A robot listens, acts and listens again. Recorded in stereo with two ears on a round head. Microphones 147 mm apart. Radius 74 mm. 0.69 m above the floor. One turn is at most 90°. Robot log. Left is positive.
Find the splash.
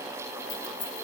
cmd idle
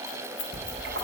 note: The splash: about 75° right or 105° right.
cmd yaw -75
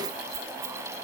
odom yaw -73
cmd idle
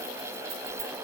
end: I heard a splash, but can't make it out now. It was about straight ahead or 30° right.